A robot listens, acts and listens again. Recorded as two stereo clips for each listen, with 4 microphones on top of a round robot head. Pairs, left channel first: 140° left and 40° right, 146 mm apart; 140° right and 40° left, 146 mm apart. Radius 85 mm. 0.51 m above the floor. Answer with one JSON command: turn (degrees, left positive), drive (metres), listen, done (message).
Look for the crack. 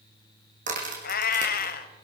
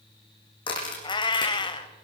{"turn": -80}
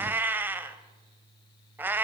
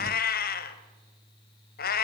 {"done": "I heard a crack from this way, but can't make it out now."}